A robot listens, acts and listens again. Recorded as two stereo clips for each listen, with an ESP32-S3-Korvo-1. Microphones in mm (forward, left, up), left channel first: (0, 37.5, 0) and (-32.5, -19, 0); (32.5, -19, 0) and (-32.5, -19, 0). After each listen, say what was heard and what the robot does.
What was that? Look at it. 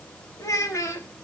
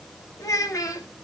The child speaking: 25° left. Turn 25° left.
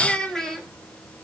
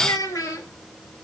The child speaking is now 20° right. Turn 20° right.
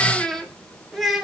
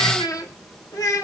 The child speaking is now 35° right. Turn 35° right.
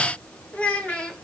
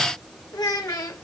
The child speaking is now 15° right. Turn 15° right.
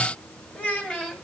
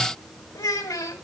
The child speaking is now 15° right. Turn 15° right.
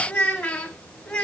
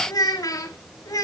Found it: a child speaking, straight ahead, 1 to 2 m away.